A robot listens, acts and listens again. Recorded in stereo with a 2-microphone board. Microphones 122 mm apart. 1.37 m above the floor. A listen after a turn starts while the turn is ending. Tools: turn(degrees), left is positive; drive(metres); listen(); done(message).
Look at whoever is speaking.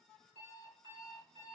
listen()
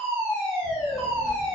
turn(degrees=75)
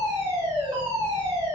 turn(degrees=55)
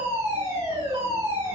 listen()
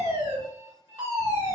listen()
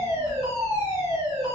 turn(degrees=40)
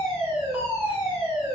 done("Found it: a child speaking, straight ahead, 1 to 2 m away.")